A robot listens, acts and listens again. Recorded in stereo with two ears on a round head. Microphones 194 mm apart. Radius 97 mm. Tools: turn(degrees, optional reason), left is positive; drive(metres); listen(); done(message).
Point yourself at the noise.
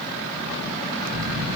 turn(degrees=-75, reason="The snoring: about 75° right or 105° right.")
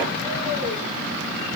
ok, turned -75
done("Facing the snoring.")